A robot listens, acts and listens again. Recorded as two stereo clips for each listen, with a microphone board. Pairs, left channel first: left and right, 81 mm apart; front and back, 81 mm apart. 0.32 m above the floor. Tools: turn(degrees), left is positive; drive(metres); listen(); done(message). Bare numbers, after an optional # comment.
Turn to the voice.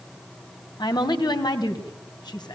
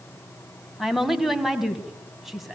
# The woman speaking: 90° left.
turn(90)
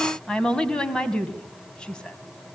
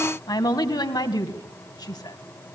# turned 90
# The woman speaking is now 15° left.
turn(15)
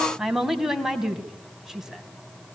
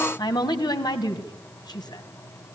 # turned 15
done("Found it: a woman speaking, straight ahead, 2 to 4 m away.")